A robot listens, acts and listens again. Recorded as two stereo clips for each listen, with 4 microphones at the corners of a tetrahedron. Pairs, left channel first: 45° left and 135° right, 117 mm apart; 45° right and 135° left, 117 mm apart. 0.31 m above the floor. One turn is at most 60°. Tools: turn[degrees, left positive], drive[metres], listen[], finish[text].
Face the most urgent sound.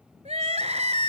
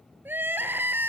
Thought: The crying: 150° right.
Action: turn[-60]
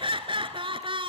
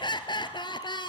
Thought: The crying is now 95° right.
Action: turn[-60]
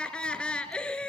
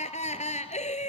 Thought: The crying is now 35° right.
Action: turn[-35]
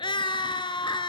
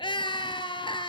Action: finish[Found it: crying, straight ahead, 1 to 2 m away.]